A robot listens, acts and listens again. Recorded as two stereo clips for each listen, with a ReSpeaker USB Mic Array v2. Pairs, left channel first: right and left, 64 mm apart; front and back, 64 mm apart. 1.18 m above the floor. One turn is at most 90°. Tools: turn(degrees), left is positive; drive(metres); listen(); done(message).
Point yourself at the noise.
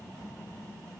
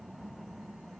listen()
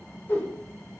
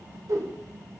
turn(degrees=-90)
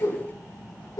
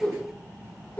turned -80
turn(degrees=-70)
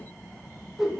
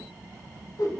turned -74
done("Found it: a whoosh, straight ahead.")